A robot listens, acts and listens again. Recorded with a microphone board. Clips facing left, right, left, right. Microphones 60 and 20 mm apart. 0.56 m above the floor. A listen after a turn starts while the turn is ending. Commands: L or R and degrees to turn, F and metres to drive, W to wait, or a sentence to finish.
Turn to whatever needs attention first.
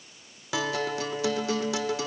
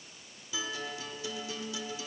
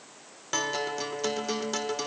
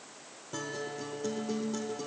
W
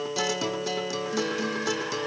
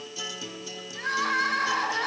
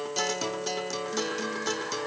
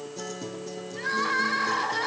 R90
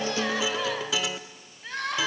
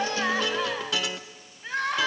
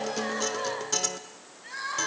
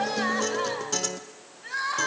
Found it: crying, straight ahead, 2 to 4 m away.